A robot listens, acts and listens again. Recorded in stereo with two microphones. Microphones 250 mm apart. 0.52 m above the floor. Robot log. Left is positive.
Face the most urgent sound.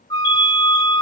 note: The alarm: about 15° left or 165° left.
cmd yaw +15
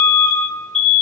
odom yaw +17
end: Found it: an alarm, straight ahead.